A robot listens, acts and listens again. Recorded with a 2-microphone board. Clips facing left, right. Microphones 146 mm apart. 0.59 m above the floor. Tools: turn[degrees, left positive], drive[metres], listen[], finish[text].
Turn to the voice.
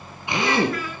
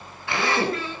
Thought: The child speaking: about 30° right or 150° right.
Action: turn[-30]
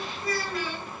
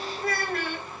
Thought: So it is at 120° right.
Action: turn[-120]
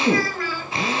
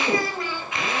Thought: The child speaking is now 20° right.
Action: turn[-20]
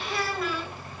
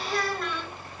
Action: finish[Facing the child speaking.]